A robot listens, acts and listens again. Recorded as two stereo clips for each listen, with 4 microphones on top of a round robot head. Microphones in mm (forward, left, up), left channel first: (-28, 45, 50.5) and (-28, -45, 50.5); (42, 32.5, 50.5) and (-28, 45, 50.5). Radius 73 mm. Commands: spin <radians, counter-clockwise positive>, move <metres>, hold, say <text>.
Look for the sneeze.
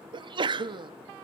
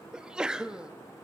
spin -1.92
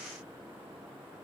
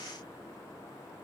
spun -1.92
say Facing where the sneeze came from. I can't hear it now.